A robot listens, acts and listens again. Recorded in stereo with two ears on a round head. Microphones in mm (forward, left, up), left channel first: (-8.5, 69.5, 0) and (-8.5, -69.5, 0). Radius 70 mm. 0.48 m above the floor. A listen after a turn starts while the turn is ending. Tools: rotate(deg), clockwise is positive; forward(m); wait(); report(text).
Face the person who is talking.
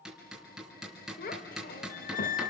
rotate(-60)
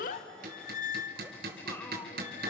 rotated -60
wait()
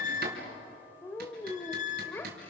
rotate(-15)
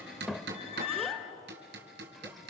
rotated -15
report("Found it: a child speaking, straight ahead.")